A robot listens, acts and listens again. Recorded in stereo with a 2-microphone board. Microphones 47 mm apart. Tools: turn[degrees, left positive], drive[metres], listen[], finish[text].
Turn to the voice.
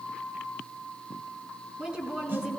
Thought: The woman speaking: about 20° right or 160° right.
Action: turn[-20]
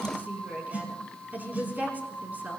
Thought: So it is at 140° right.
Action: turn[-140]
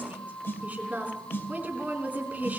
Thought: The woman speaking is now 35° right.
Action: turn[-35]
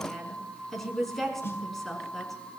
Action: finish[Facing the woman speaking, over 4 m away.]